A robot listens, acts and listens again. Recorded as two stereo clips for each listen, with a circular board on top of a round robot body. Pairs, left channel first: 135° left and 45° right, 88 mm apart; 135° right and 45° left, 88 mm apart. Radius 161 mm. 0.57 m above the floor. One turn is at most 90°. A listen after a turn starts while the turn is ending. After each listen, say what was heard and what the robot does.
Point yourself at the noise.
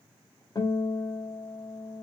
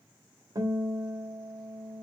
The guitar: 90° left. Turn 90° left.
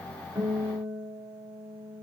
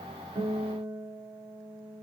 Found it: a guitar, straight ahead, 2 to 4 m away.